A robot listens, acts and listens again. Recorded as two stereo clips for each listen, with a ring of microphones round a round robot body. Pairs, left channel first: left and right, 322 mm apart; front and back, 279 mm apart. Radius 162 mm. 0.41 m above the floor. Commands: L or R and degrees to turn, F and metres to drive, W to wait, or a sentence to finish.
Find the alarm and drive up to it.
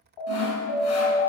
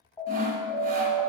L75
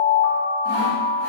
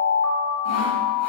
F1.0
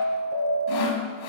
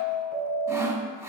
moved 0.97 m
R10
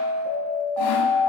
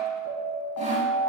F1.0
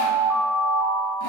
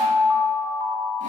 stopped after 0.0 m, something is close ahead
Arrived at the alarm, straight ahead.